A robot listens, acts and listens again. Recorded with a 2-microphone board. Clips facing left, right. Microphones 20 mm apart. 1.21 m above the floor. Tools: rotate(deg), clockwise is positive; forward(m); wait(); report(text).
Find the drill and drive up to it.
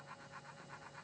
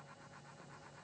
wait()
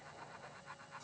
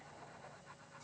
wait()
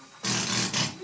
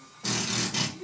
rotate(-75)
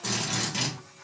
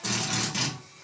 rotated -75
rotate(-10)
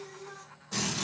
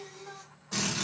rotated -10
forward(1.0)
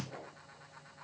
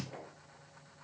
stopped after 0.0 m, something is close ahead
wait()
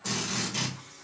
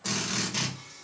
report("Something is in my way. I am facing the drill but have not reached it.")